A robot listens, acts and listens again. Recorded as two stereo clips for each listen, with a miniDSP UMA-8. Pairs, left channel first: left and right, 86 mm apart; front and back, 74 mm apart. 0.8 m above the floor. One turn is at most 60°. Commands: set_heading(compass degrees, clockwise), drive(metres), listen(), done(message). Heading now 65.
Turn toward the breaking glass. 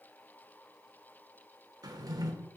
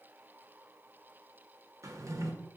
listen()
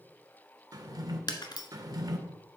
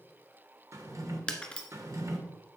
set_heading(5)
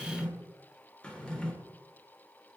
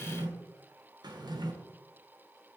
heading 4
set_heading(349)
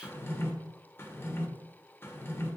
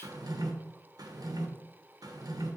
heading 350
done("Facing where the breaking glass came from. I can't hear it now.")